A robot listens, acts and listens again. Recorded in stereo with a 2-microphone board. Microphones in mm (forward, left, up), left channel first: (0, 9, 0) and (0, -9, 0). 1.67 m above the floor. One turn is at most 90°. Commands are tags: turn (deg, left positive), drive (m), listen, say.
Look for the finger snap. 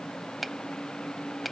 <turn deg="-30"/>
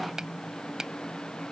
<turn deg="-90"/>
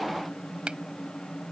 <turn deg="-55"/>
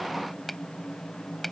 <turn deg="10"/>
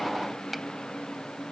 <listen/>
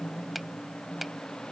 <say>Facing the finger snap.</say>